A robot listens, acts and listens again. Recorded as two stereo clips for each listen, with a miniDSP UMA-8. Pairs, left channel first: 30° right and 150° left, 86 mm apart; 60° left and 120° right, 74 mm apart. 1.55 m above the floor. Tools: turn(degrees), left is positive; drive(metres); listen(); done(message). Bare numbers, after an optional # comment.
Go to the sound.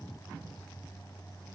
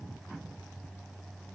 listen()
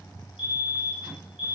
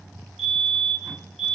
# The fire alarm: 30° right.
turn(-30)
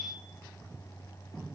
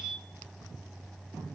# The fire alarm is now 20° right.
turn(-20)
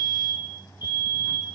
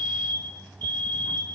drive(1.0)
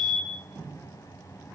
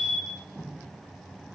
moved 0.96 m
# The fire alarm is now 10° right.
turn(-10)
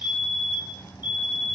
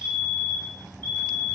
drive(1.0)
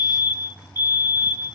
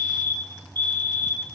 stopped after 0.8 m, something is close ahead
done("Arrived at the fire alarm, straight ahead.")